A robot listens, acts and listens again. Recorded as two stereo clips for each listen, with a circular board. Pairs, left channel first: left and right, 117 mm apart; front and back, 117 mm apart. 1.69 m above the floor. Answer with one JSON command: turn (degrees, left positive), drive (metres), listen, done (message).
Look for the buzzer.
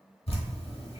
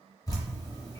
{"listen": true}
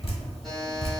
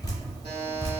{"turn": 180}
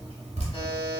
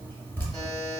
{"turn": 50}
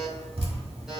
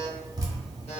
{"done": "Found it: a buzzer, straight ahead."}